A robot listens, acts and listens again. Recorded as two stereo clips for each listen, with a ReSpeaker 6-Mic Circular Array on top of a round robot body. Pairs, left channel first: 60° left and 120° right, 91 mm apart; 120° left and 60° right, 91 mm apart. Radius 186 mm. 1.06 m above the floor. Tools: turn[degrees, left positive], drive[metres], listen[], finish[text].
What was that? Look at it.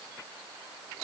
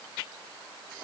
Action: listen[]
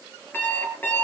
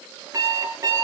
Thought: The alarm clock: 10° right.
Action: turn[-10]
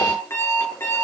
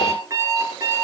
Action: finish[Facing the alarm clock, over 4 m away.]